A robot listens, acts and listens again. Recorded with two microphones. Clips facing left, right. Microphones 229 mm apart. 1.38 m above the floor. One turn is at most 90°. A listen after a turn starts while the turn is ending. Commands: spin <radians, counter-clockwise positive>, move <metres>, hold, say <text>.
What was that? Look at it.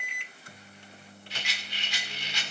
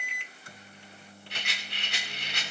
spin -0.96
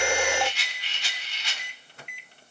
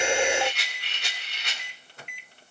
spin -1.13
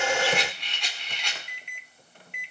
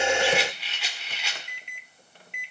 say Found it: a rattle, straight ahead, 2 to 4 m away.